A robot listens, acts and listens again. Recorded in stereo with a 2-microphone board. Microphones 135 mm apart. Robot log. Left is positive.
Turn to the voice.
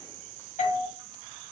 cmd idle
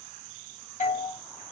cmd idle
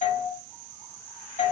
end: I can't make out anyone speaking, only a doorbell.